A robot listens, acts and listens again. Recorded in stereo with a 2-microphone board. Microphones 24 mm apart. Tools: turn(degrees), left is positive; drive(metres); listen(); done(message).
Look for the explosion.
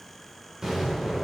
turn(degrees=-30)
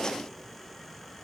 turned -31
listen()
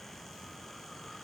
done("I heard an explosion, but can't make it out now. It was about straight ahead or 120° right.")